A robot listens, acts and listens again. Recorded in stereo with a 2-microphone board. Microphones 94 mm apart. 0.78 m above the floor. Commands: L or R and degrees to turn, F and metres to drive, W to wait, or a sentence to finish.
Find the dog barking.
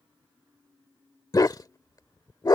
L45
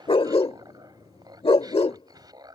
L90
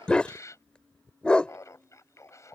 L10
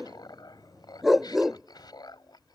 Found it: a dog barking, straight ahead.